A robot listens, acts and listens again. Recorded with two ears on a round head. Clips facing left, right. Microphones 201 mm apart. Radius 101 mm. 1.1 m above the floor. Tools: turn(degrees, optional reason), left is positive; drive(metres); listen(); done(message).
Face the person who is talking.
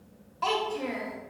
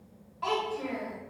turn(degrees=55, reason="The child speaking: about 55° left or 125° left.")
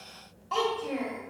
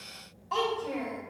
done("Facing the child speaking.")